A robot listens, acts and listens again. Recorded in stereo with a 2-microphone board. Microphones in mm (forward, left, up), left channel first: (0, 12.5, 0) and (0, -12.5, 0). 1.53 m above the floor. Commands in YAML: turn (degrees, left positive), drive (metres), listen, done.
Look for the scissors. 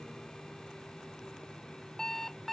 listen: true
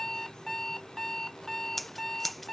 turn: 30
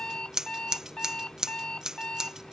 turn: -25
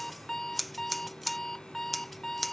done: "Facing the scissors."